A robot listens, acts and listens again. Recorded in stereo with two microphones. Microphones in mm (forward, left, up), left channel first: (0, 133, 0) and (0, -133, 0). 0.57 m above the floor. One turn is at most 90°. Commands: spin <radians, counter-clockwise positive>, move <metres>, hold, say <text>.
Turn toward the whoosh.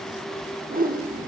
spin -0.52
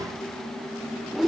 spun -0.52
say Found it: a whoosh, straight ahead, under 1 m away.